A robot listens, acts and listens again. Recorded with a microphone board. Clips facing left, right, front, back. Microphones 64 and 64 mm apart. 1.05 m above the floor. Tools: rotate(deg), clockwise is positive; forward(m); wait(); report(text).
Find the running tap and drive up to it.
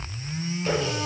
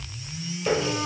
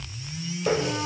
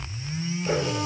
rotate(20)
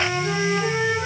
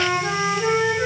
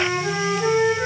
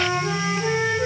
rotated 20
wait()
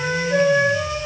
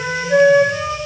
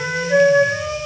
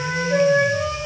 wait()
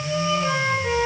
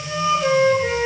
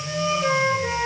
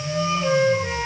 report("I heard a running tap from this way, but can't make it out now. I did not reach it.")